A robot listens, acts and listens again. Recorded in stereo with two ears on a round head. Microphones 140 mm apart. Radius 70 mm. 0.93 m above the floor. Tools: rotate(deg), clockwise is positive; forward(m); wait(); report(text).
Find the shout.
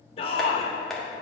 rotate(-35)
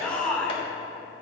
report("Found it: a shout, straight ahead.")